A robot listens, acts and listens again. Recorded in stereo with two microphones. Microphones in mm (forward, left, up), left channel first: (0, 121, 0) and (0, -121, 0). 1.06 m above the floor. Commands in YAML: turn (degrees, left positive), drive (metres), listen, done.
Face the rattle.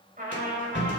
turn: 50
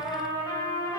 listen: true
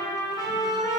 listen: true
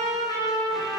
done: "I heard a rattle, but can't make it out now. It was about straight ahead or 80° left."